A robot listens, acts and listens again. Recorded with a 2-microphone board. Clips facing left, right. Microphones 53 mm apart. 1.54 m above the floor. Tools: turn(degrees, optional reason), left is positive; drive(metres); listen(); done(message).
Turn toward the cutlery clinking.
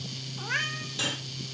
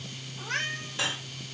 turn(degrees=-25, reason="The cutlery clinking: about 25° right or 155° right.")
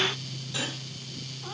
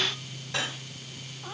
turn(degrees=-130, reason="So it is at 130° right.")
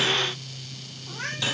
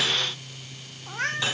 turn(degrees=-20, reason="The cutlery clinking is now 20° right.")
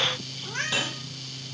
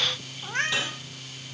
done("Facing the cutlery clinking, over 4 m away.")